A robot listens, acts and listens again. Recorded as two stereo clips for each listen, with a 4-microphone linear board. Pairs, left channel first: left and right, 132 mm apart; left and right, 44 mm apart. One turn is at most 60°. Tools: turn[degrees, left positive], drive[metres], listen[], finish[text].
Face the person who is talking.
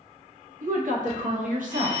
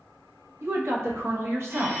Action: turn[-60]
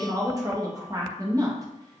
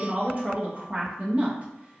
Thought: So it is at 30° right.
Action: turn[-30]
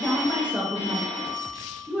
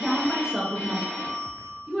Thought: The woman speaking is now 10° right.
Action: turn[-10]
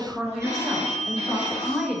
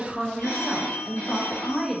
Action: finish[Found it: a woman speaking, straight ahead.]